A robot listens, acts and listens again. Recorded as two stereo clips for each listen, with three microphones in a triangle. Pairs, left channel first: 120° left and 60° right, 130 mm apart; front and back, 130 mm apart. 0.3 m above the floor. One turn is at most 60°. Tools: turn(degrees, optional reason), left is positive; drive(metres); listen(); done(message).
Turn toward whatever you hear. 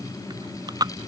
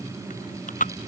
done("Found it: chewing, straight ahead.")